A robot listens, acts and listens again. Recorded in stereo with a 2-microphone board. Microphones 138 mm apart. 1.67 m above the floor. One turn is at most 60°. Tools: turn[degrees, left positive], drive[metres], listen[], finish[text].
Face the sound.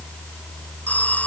Action: turn[30]
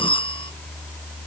Thought: So it is at 140° left.
Action: turn[60]
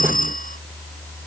Thought: The phone ringing is now 90° left.
Action: turn[60]
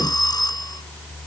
Thought: The phone ringing is now 30° left.
Action: turn[30]
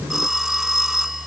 Action: finish[Facing the phone ringing.]